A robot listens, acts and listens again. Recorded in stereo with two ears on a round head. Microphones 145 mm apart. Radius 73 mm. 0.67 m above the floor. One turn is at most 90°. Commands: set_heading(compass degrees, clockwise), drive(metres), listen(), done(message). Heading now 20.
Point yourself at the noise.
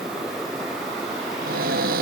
set_heading(80)
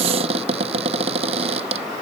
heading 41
set_heading(81)
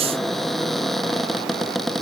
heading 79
done("Facing the cupboard door.")